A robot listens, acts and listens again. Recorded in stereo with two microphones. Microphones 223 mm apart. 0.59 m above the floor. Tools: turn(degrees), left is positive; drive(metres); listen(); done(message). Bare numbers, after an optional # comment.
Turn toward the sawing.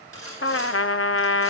turn(-90)
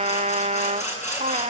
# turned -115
# So it is at 30° left.
turn(30)
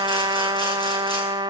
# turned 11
# Nothing new. It was at 20° left.
turn(20)
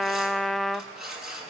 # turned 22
done("Found it: sawing, straight ahead.")